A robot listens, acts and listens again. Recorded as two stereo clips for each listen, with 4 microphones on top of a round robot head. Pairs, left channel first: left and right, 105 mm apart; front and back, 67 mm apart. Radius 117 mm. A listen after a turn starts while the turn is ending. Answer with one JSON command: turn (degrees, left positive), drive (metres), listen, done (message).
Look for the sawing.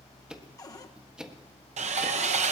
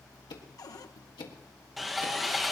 {"turn": -90}
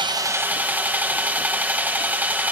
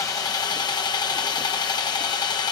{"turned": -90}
{"turn": -15}
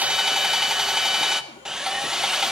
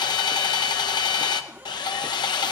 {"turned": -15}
{"done": "Facing the sawing."}